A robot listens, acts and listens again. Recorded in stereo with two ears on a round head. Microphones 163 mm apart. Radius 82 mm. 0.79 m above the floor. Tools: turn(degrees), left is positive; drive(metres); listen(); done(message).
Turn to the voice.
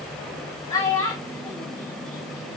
turn(degrees=20)
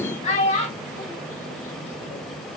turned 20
turn(degrees=140)
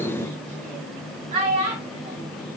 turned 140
turn(degrees=-35)
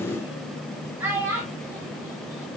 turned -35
turn(degrees=-10)
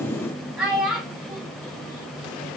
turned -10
done("Facing the child speaking.")